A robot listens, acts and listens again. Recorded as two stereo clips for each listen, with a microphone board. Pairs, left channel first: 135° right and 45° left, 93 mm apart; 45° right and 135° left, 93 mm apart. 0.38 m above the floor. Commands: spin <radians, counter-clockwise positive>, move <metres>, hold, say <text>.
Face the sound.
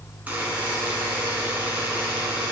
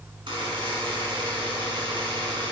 spin 2.01
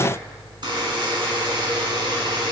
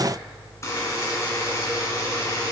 spin 0.17
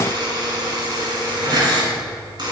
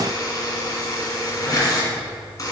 say Facing the buzzer, 1 to 2 m away.